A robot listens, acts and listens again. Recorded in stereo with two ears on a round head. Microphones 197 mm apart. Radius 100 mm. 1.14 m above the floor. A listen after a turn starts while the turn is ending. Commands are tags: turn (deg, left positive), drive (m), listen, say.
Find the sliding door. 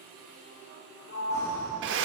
<turn deg="70"/>
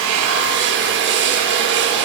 <listen/>
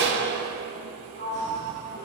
<turn deg="40"/>
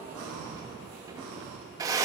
<listen/>
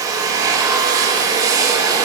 <listen/>
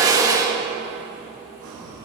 <say>I heard a sliding door from this way, but can't make it out now.</say>